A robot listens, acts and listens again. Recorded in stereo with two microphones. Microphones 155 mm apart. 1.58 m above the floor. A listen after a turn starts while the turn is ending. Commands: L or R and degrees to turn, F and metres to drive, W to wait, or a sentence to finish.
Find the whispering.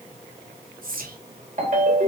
R65
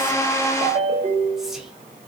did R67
W
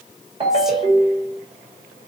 W
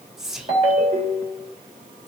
Facing the whispering, under 1 m away.